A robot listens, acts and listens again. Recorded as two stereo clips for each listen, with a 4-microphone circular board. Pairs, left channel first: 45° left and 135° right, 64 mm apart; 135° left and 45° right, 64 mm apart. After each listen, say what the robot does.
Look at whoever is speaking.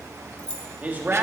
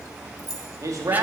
Turn 75° right.
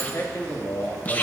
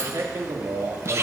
Turn 20° right.
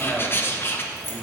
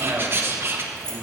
Turn 30° right.
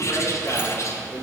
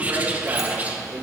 Turn 20° right.
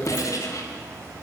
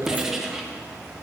Found it: a man speaking, straight ahead, 2 to 4 m away.